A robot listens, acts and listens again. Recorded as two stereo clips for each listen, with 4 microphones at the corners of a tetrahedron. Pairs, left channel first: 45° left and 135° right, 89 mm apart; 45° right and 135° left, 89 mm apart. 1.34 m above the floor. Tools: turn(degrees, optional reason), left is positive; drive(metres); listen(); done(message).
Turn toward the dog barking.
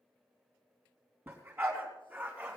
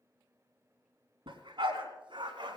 turn(degrees=155, reason="The dog barking: 155° left.")
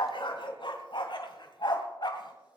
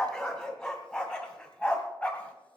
turn(degrees=30, reason="The dog barking is now 30° left.")
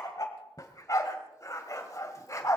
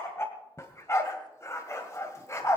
done("Facing the dog barking, 1 to 2 m away.")